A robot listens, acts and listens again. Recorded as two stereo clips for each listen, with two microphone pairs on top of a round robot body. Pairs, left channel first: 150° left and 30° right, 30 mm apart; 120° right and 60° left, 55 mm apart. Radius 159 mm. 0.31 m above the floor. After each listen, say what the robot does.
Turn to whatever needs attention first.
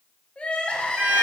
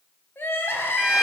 Turn 160° right.
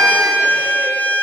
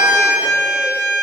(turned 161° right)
Keep listening.
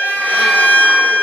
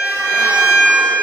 Keep listening.
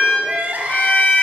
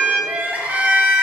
Found it: crying, straight ahead.